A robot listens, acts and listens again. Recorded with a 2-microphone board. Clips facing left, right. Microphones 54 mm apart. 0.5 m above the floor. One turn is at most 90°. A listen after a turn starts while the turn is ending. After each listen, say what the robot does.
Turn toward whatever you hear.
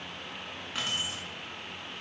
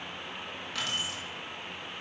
Turn 25° left.
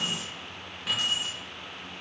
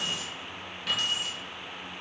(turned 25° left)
Turn 30° left.
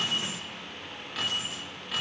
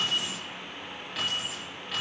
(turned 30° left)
Found it: keys jangling, straight ahead, over 4 m away.